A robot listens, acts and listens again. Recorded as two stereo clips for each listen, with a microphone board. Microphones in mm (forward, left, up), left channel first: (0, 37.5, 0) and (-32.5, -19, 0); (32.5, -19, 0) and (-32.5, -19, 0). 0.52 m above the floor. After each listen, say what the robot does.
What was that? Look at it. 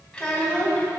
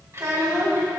Turn 130° left.
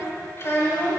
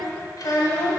Found it: a child speaking, straight ahead, 1 to 2 m away.